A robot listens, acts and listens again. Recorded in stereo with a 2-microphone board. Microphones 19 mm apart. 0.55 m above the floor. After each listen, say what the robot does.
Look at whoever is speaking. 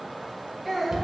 Turn 30° left.
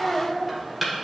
Turn 35° right.
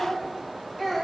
Turn 10° left.
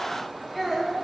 Facing the child speaking.